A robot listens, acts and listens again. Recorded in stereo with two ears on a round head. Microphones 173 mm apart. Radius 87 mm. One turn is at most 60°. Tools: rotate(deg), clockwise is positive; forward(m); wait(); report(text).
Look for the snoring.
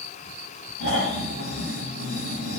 rotate(-60)
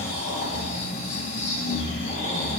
rotate(-20)
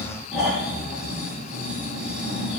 report("Found it: snoring, straight ahead.")